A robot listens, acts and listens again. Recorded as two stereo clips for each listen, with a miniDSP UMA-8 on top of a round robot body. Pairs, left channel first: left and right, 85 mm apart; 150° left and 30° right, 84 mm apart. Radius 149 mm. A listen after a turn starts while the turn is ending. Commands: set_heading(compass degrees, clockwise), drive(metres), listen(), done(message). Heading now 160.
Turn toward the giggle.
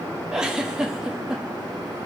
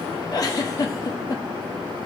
set_heading(335)
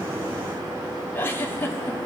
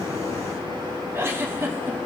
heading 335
set_heading(310)
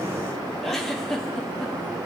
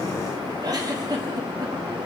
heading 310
done("Found it: a giggle, straight ahead.")